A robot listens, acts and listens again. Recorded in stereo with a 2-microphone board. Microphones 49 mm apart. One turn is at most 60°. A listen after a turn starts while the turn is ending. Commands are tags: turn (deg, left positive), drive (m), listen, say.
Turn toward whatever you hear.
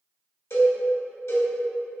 <turn deg="60"/>
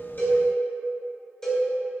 <turn deg="15"/>
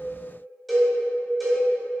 <say>Facing the cowbell.</say>